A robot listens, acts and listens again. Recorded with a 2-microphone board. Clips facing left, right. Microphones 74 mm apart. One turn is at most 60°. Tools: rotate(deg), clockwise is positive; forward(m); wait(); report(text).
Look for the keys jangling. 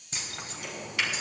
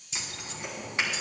rotate(-50)
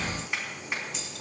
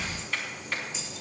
rotate(-60)
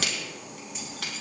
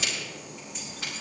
wait()
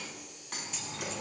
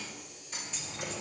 report("Facing the keys jangling.")